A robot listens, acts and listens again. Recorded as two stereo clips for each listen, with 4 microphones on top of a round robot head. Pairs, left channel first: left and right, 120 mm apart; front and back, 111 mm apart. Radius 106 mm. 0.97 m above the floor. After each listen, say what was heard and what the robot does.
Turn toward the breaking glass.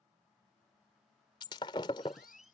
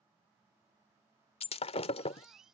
The breaking glass: 25° left. Turn 25° left.
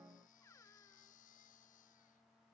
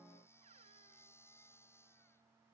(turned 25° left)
Facing where the breaking glass came from. I can't hear it now.